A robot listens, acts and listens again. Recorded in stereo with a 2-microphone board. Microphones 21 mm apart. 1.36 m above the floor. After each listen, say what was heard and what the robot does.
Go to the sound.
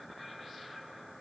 Keep listening.
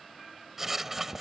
Turn 30° right.
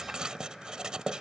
So it is at 140° right. Turn 140° right.
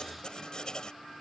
The writing is now 45° left. Turn 45° left.
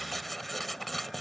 Drive 1.0 m forward.
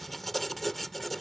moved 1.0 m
The writing is now 10° left. Turn 10° left.
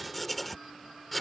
Drive 1.0 m forward.
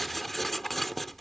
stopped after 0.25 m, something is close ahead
The writing is now 10° left. Turn 10° left.
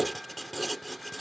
Arrived at the writing, straight ahead.